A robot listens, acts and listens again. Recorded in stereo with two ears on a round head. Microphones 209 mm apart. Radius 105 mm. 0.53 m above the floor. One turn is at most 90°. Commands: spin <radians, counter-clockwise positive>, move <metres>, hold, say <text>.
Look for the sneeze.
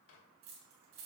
hold
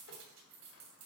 hold
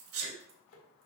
spin -1.13
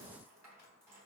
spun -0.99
hold
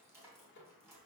say I heard a sneeze, but can't make it out now. It was about 10° right or 55° right.